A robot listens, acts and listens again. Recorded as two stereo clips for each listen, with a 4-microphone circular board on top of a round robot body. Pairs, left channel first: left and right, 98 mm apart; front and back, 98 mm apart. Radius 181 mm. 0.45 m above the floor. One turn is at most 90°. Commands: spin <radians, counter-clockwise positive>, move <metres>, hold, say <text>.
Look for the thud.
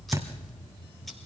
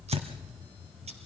spin -1.57
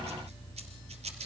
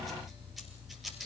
spin -1.05
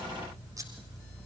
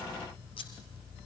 say I heard a thud from this way, but can't make it out now.